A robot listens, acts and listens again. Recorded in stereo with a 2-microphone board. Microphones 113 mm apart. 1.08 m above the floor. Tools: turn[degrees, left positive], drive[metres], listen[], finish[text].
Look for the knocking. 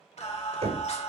Action: turn[-90]
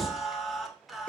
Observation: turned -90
Thought: So it is at 10° left.
Action: turn[10]
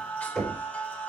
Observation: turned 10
Action: finish[Facing the knocking, over 4 m away.]